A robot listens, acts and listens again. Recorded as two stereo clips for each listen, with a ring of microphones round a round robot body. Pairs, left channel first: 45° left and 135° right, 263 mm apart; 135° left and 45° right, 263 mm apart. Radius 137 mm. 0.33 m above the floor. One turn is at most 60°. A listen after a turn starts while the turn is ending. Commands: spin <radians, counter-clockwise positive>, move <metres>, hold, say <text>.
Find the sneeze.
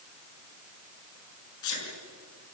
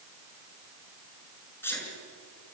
spin 0.96
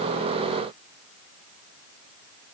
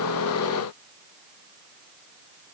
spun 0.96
say Facing where the sneeze came from. I can't hear it now.